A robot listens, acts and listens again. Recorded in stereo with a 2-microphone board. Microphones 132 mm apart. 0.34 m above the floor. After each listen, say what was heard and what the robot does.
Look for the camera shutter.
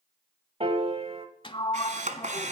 The camera shutter: about 70° right or 110° right. Turn 70° right.
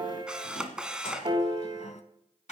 Facing the camera shutter, 1 to 2 m away.